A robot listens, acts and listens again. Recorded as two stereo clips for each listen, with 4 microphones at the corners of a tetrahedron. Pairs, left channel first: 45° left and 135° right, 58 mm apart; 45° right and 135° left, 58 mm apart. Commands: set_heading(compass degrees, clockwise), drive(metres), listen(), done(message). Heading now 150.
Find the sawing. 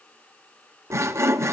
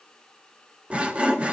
set_heading(310)
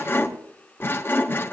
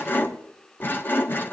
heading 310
done("Found it: sawing, straight ahead, 1 to 2 m away.")